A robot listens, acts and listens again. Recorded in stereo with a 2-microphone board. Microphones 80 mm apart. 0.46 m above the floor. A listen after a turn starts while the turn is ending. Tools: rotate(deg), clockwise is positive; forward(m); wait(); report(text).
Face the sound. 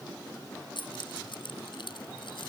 rotate(-90)
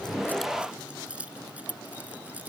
rotate(20)
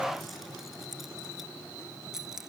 report("Found it: keys jangling, straight ahead.")